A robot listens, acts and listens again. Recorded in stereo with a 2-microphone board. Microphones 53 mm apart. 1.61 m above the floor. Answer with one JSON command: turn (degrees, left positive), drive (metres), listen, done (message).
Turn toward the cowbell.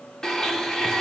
{"listen": true}
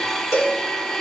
{"turn": 90}
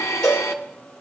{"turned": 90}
{"turn": 10}
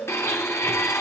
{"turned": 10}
{"listen": true}
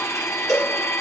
{"done": "Found it: a cowbell, straight ahead, over 4 m away."}